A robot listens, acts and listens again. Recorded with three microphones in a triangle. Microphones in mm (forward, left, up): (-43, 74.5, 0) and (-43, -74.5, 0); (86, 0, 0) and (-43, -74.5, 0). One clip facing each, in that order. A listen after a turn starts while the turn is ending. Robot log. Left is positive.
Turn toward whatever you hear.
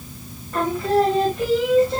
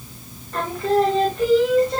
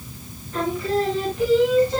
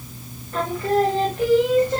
note: The singing: straight behind.
cmd yaw +180
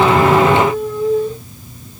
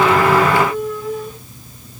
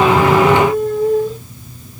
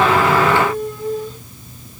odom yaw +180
note: The singing is now 35° left.
cmd yaw +35
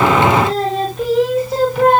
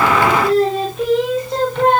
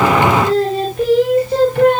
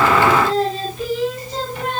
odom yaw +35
note: The singing is now 10° left.
cmd yaw +10
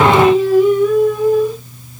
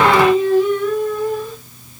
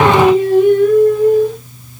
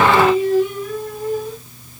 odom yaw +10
note: The singing is now 15° left.
cmd yaw +15
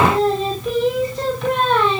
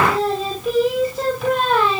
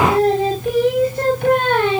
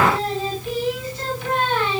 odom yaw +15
end: Found it: singing, straight ahead.